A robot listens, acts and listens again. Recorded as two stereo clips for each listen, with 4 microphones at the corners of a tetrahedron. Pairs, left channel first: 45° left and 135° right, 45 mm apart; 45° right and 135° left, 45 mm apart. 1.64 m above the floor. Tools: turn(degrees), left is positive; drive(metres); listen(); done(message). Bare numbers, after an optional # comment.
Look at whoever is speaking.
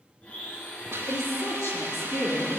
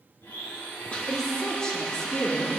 # The woman speaking: 20° left.
turn(20)
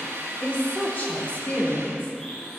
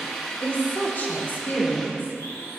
# The woman speaking is now 10° right.
turn(-10)
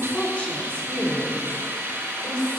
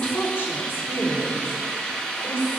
# The woman speaking is now 20° right.
turn(-20)
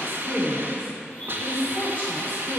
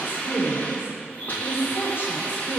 done("Facing the woman speaking.")